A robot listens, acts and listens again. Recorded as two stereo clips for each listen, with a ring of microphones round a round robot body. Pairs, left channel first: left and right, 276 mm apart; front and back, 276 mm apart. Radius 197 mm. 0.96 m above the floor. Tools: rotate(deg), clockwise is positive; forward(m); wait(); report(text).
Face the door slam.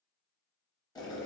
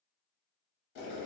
wait()
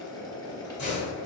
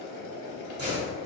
rotate(-140)
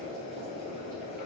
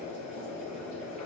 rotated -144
report("I heard a door slam from this way, but can't make it out now.")